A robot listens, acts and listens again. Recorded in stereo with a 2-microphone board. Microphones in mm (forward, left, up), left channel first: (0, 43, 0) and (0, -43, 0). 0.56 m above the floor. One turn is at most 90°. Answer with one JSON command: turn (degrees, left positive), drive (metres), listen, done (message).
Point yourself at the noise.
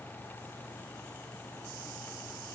{"listen": true}
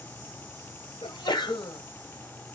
{"turn": 60}
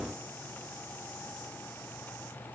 {"listen": true}
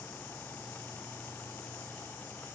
{"done": "I heard a sneeze, but can't make it out now. It was about straight ahead or 60° left."}